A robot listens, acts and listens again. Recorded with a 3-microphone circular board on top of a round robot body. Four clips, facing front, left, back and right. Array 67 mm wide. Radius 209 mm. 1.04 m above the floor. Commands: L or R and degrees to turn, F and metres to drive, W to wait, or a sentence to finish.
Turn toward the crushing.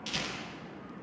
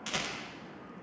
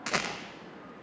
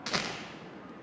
W
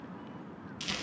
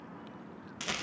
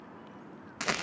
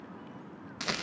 W
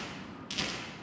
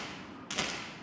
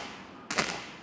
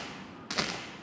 I can't make out crushing to turn to.